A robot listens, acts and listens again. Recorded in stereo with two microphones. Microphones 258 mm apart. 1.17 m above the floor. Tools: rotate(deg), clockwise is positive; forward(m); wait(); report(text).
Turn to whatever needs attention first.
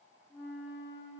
wait()
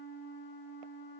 wait()
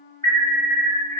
rotate(20)
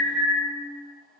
report("Found it: an alarm, straight ahead.")